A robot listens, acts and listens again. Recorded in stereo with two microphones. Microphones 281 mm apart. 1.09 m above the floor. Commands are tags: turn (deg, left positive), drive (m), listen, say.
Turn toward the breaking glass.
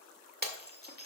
<turn deg="-35"/>
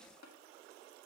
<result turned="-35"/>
<listen/>
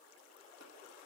<say>I heard breaking glass, but can't make it out now. It was about straight ahead or 110° right.</say>